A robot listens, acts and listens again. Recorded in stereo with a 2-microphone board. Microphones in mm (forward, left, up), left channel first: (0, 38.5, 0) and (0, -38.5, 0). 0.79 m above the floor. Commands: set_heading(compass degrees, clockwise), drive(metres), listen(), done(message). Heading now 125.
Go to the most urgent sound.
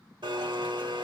listen()
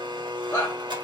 set_heading(95)
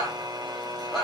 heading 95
drive(1.0)
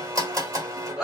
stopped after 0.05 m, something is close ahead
done("Blocked. The shout is further on, straight ahead.")